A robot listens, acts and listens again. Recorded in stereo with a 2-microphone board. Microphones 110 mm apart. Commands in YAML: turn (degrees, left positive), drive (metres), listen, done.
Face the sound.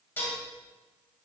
turn: 20
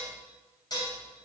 turn: 140
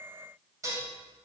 turn: -30
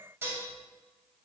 turn: -20
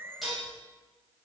done: "Found it: dishes clattering, straight ahead, 2 to 4 m away."